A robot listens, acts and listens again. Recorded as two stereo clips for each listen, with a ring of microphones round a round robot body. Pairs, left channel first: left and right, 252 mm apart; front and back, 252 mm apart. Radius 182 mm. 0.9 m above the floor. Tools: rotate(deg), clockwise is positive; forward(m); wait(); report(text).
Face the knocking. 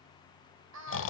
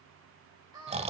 wait()
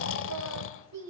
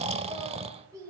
wait()
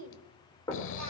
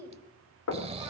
rotate(-10)
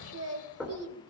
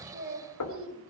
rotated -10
report("Facing the knocking.")